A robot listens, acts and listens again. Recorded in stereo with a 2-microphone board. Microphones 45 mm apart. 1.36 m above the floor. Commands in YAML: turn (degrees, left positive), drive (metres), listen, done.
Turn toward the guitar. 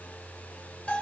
listen: true
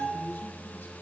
listen: true
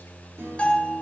turn: -65
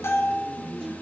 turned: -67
turn: -50
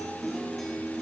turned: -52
done: "Found it: a guitar, straight ahead."